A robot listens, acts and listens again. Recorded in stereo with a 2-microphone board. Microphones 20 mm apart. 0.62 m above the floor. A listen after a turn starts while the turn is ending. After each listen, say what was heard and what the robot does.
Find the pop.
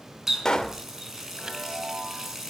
The pop: about 35° left or 145° left. Turn 35° left.
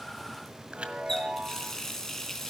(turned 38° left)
Keep listening.
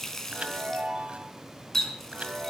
I heard a pop, but can't make it out now. It was about straight ahead or 105° left.